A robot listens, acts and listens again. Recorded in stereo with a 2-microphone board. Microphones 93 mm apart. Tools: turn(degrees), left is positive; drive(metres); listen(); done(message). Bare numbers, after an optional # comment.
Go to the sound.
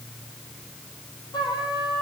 # The trumpet: about 50° left or 130° left.
turn(50)
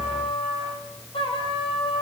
# So it is at 80° left.
turn(80)
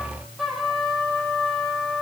drive(1.0)
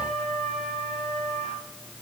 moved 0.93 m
drive(1.0)
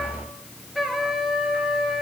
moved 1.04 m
drive(1.0)
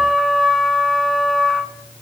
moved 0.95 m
drive(1.0)
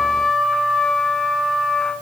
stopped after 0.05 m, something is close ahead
done("I am next to the trumpet.")